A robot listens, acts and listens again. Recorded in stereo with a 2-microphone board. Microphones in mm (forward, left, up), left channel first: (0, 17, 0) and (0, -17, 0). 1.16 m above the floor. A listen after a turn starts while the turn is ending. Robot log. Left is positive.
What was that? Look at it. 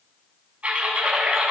note: The typing on a keyboard: about 40° right or 140° right.
cmd yaw -40
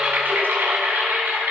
note: So it is at 100° right.
cmd yaw -100
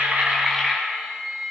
note: The typing on a keyboard is now 10° right.
cmd yaw -10
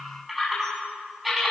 end: Found it: typing on a keyboard, straight ahead, over 4 m away.